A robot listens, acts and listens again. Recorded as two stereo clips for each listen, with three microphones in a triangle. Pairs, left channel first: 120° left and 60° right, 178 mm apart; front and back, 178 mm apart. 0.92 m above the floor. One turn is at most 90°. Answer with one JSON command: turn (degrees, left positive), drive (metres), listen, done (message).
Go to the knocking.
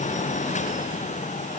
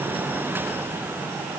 {"listen": true}
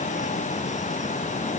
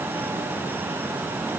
{"listen": true}
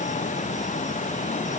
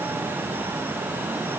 {"done": "I can't make out knocking."}